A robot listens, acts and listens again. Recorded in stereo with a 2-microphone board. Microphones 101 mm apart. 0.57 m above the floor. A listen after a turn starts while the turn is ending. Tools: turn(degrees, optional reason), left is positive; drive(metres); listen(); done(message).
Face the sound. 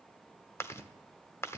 turn(degrees=25, reason="The chewing: about 25° left or 155° left.")
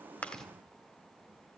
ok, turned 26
listen()
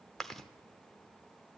done("Found it: chewing, straight ahead, under 1 m away.")